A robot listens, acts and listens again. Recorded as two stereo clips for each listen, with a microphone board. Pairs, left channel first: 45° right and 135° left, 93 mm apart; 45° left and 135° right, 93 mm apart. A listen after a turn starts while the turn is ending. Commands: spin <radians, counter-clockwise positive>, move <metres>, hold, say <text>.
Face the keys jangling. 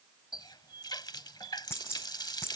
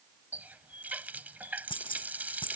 spin 0.35
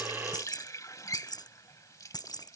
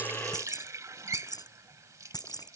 say Found it: keys jangling, straight ahead.